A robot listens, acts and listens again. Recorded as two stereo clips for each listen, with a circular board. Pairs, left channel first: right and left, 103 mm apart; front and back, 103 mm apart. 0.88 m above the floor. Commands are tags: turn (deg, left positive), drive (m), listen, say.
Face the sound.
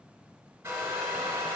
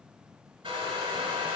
<turn deg="155"/>
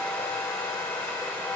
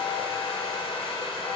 <turn deg="-20"/>
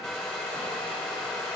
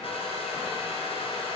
<say>Facing the hair dryer.</say>